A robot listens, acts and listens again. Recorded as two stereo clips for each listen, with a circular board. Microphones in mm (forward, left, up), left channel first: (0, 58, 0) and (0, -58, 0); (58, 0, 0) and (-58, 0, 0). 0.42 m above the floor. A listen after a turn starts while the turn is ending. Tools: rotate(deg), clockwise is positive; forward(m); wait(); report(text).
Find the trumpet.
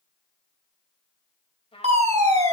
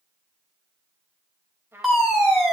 rotate(-115)
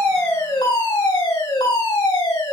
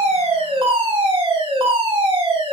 wait()
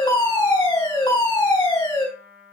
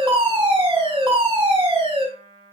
rotate(15)
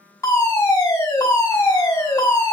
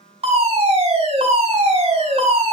wait()
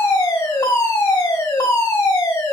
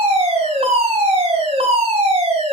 wait()
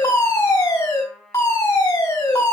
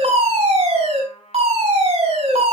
report("Facing the trumpet, 2 to 4 m away.")